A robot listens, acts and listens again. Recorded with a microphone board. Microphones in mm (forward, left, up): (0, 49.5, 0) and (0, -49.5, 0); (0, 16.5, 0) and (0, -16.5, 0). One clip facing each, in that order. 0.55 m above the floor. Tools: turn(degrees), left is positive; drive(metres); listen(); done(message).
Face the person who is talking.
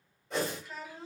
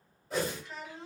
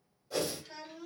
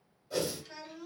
turn(degrees=30)
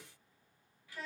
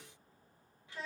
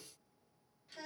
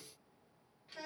turn(degrees=-25)
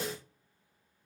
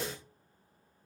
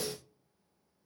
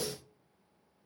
listen()
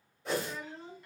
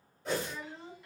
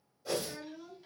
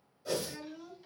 done("Found it: a child speaking, straight ahead, 1 to 2 m away.")